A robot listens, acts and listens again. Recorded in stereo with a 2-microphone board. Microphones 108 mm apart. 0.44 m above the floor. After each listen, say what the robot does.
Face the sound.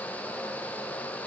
Keep listening.
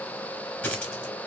Turn 30° left.
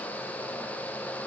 Keep listening.
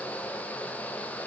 I heard a dropped coin, but can't make it out now. It was about 20° right or 140° left.